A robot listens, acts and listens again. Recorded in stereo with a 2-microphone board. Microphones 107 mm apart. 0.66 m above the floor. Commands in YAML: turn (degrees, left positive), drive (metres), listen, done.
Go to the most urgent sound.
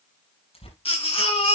turn: 60
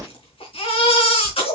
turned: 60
turn: 60
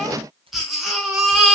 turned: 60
drive: 1.0
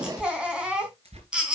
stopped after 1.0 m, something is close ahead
turn: -10
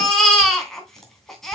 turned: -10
done: "Something is in my way. I am facing the baby crying but have not reached it."